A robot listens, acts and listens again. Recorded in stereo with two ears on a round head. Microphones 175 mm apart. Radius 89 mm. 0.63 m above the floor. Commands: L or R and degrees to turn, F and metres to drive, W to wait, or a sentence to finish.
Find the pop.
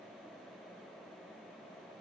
W
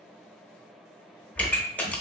L30
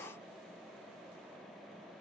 W
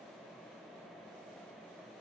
I heard a pop, but can't make it out now. It was about 20° right or 140° left.